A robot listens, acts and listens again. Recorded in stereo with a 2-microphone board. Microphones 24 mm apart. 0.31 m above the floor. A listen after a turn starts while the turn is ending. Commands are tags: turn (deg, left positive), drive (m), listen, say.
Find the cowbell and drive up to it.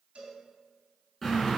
<turn deg="-60"/>
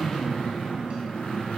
<listen/>
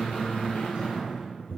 <listen/>
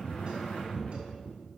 <say>I heard a cowbell, but can't make it out now. It was about straight ahead or 60° right. I did not reach it.</say>